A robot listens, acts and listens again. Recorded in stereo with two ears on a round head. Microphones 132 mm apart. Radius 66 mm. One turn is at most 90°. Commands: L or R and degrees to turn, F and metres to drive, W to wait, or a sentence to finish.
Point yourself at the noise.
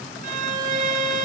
R55
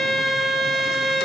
Found it: a violin, straight ahead, 1 to 2 m away.